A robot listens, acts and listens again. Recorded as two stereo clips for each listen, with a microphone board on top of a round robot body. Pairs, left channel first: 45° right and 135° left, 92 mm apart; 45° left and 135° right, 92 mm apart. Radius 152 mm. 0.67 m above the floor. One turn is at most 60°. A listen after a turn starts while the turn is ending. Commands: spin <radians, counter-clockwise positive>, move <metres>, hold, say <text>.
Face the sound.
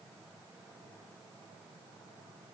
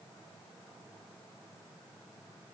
hold
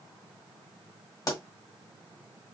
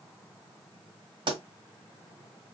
spin -1.05
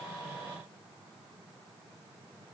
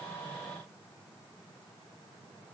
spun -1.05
spin -0.70
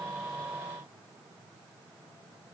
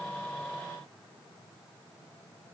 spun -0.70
say Facing where the pop came from. I can't hear it now.